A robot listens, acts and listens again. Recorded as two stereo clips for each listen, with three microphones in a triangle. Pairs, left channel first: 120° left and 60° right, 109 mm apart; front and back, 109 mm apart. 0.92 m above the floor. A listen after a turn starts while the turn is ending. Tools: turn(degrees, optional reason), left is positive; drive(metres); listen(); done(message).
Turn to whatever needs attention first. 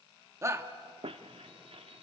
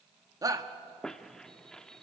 turn(degrees=-120, reason="The shout: 120° right.")
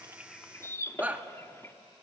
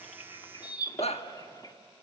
turn(degrees=15, reason="The shout is now 15° left.")
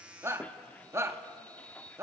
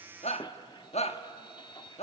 done("Found it: a shout, straight ahead, 1 to 2 m away.")